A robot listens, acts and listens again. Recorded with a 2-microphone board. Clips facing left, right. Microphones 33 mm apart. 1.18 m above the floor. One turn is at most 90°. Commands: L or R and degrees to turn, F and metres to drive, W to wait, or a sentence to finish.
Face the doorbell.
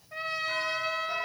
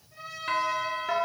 R60
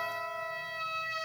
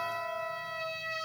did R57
Facing the doorbell, 2 to 4 m away.